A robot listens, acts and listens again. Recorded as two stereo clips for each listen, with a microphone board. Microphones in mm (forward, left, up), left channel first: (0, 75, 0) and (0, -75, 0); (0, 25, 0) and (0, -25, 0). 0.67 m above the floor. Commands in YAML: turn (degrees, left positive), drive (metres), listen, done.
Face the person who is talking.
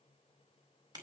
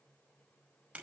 listen: true
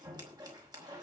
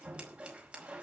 listen: true
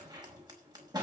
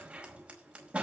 done: "I can't make out anyone speaking, only scissors."